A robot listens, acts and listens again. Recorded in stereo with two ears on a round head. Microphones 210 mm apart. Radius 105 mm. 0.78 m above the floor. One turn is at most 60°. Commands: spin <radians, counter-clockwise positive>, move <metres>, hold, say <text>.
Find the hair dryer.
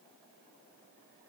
hold
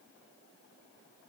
hold
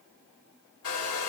spin 1.05
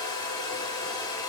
spin 0.35
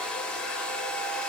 say Facing the hair dryer, 1 to 2 m away.